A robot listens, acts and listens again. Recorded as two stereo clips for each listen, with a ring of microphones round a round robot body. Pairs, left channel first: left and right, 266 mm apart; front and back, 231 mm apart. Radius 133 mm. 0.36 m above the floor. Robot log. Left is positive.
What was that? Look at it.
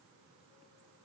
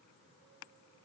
cmd idle
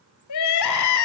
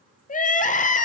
note: The crying: 60° left.
cmd yaw +60
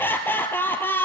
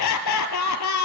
end: Found it: crying, straight ahead, 1 to 2 m away.